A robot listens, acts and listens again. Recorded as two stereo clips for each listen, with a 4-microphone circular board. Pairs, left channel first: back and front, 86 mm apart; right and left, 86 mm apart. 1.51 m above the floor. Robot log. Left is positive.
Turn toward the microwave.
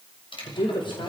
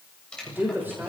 note: The microwave: 170° right.
cmd yaw -170
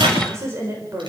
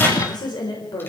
note: The microwave is now 25° right.
cmd yaw -25
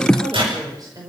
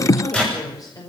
note: The microwave is now 10° right.
cmd yaw -10
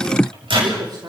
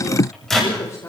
end: Facing the microwave, over 4 m away.